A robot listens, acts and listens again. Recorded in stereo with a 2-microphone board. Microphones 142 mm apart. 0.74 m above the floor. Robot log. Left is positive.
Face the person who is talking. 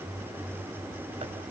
cmd idle
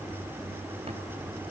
cmd idle
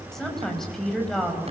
cmd yaw +30
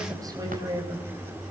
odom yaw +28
note: So it is at 25° right.
cmd yaw -25
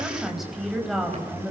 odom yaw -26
end: Found it: a woman speaking, straight ahead.